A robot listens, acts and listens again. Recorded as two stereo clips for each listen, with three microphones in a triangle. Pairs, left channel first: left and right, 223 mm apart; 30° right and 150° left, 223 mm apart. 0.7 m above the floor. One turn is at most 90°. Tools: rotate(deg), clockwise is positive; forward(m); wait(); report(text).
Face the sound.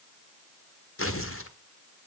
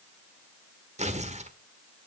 rotate(-90)
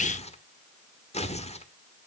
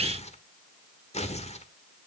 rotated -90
rotate(-30)
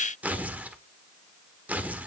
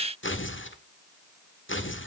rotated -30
report("Found it: tearing paper, straight ahead, 1 to 2 m away.")